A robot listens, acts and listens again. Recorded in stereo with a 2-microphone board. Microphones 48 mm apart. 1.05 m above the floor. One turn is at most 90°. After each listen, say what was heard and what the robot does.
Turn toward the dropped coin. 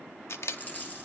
The dropped coin: about 40° left or 140° left. Turn 40° left.
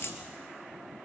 So it is at 95° left. Turn 90° left.
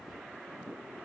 I heard a dropped coin from this way, but can't make it out now.